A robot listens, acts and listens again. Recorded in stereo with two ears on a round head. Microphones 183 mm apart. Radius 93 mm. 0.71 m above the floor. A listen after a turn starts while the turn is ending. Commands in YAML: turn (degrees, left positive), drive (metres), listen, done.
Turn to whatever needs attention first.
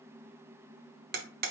listen: true
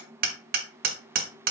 listen: true
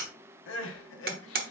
turn: 65
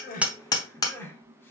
turn: 10
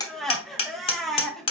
done: "Facing the crying, under 1 m away."